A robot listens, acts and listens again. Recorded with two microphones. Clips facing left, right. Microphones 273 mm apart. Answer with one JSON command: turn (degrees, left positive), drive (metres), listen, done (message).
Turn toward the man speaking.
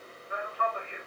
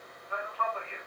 {"turn": 20}
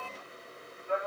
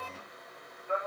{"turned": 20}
{"turn": 30}
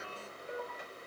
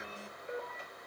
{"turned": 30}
{"turn": -20}
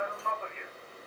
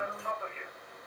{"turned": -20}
{"done": "Facing the man speaking."}